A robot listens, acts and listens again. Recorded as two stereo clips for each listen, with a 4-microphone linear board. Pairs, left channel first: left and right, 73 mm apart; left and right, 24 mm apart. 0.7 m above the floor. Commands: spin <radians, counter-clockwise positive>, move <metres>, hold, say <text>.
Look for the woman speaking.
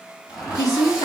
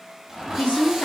spin 0.96
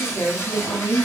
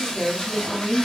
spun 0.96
spin 0.44
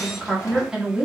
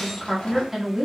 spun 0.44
spin -0.17
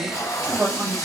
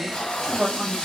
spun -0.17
spin -0.26
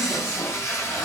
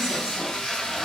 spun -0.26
hold
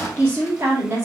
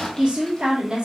spin -0.52
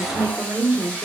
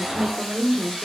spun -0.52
spin -0.26
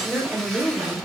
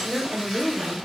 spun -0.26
say Found it: a woman speaking, straight ahead, 1 to 2 m away.